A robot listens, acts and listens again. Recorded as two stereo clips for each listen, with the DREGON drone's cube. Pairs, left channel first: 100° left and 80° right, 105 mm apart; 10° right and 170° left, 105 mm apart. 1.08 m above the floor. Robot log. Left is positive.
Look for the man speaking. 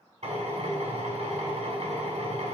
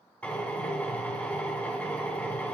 cmd idle
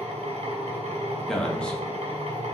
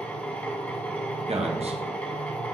note: The man speaking: straight behind.
cmd yaw +180
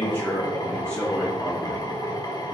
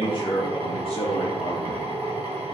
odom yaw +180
note: The man speaking is now 20° left.
cmd yaw +20
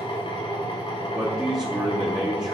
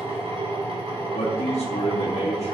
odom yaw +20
end: Found it: a man speaking, straight ahead, 2 to 4 m away.